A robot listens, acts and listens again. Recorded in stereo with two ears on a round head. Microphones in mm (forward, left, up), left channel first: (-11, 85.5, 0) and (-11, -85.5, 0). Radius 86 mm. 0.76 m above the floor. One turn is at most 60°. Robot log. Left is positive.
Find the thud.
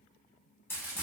cmd idle
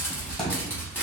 cmd yaw +30
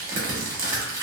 cmd idle
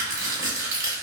end: I heard a thud, but can't make it out now. It was about 30° right or 150° left.